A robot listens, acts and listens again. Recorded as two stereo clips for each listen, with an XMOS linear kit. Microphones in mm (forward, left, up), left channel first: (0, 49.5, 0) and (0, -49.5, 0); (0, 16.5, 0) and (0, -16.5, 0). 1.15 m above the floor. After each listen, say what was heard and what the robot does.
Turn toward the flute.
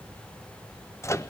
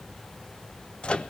Keep listening.
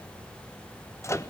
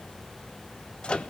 Keep listening.
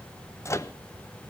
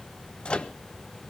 I can't make out a flute, only a microwave.